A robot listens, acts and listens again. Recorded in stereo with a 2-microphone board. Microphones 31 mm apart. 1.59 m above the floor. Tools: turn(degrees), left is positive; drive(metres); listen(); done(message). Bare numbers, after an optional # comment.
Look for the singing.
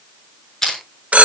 listen()
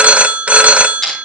listen()
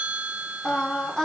# The singing: about 20° left or 160° left.
turn(20)
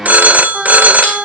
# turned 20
done("Found it: singing, straight ahead, over 4 m away.")